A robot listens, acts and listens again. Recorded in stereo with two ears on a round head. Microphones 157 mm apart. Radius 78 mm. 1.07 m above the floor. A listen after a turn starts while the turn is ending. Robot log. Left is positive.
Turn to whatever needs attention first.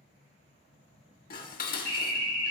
note: The alarm: about 60° left or 120° left.
cmd yaw +60
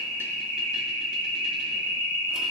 note: So it is at 65° left.
cmd yaw +65
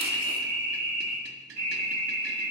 note: The alarm is now 10° left.
cmd yaw +10
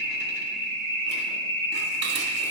end: Found it: an alarm, straight ahead, over 4 m away.